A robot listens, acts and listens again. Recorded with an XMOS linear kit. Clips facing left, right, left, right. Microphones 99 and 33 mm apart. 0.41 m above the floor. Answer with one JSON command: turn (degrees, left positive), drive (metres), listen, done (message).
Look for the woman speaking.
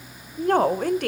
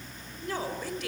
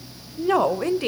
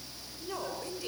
{"turn": 55}
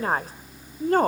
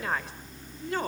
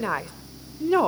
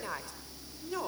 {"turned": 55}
{"turn": 50}
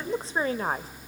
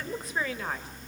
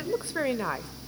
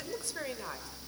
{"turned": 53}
{"turn": 35}
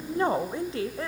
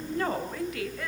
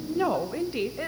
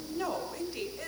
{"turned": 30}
{"turn": 30}
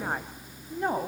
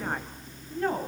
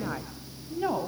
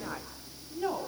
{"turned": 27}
{"turn": 20}
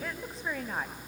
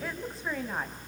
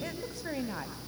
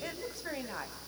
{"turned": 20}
{"done": "Facing the woman speaking."}